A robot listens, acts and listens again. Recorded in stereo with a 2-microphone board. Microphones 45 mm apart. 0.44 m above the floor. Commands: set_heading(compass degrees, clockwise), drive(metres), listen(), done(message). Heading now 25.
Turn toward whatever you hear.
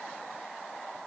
listen()
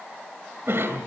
set_heading(90)
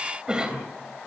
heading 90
set_heading(110)
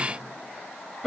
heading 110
done("Found it: a cough, straight ahead.")